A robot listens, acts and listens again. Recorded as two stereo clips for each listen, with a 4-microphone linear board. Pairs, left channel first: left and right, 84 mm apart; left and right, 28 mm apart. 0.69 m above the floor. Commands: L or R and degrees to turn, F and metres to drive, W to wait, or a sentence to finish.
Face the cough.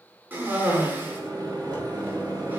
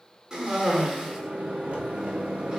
R25
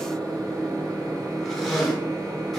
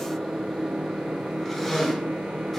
Found it: a cough, straight ahead.